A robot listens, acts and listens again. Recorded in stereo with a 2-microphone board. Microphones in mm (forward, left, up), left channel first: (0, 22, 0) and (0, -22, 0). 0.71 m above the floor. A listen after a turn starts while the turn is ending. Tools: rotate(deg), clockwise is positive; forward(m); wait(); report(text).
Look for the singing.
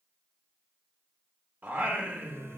rotate(50)
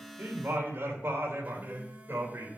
rotate(65)
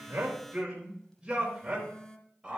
rotate(20)
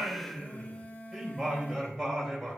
report("Found it: singing, straight ahead, over 4 m away.")